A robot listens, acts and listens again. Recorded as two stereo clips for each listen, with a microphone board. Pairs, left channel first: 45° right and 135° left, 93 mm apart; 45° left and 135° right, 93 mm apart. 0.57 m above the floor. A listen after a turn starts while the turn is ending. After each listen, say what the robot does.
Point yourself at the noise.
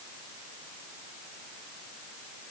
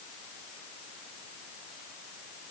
Keep listening.
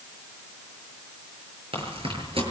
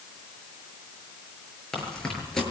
Turn 130° left.
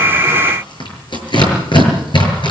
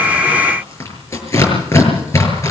Turn 15° right.
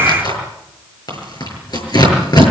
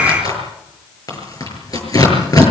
Found it: tearing paper, straight ahead, over 4 m away.